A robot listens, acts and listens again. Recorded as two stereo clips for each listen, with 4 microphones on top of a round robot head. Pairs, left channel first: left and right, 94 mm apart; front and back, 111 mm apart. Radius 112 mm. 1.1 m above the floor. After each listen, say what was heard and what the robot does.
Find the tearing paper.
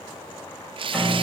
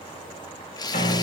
The tearing paper: 60° right. Turn 60° right.
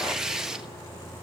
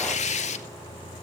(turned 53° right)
Found it: tearing paper, straight ahead.